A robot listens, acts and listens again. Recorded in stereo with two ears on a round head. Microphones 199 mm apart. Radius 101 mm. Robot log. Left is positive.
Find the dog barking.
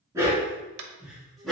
cmd yaw +30
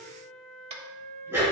cmd yaw -30
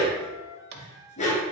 note: So it is at 30° left.
cmd yaw +30
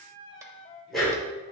end: Facing the dog barking.